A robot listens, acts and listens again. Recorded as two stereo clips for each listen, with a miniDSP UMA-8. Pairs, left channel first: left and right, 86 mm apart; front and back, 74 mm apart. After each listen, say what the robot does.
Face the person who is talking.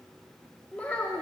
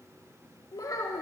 Turn 20° left.
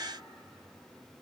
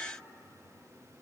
Keep listening.
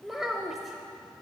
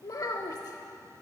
Found it: a child speaking, straight ahead, under 1 m away.